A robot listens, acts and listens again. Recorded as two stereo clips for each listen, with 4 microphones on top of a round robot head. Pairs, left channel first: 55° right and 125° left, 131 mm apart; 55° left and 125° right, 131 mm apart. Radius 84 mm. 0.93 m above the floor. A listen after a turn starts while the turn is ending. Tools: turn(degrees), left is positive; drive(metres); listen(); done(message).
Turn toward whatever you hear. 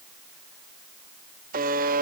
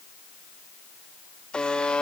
turn(degrees=140)
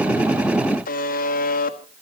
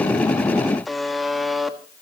turn(degrees=-35)
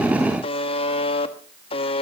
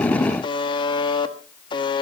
done("Facing the buzzer.")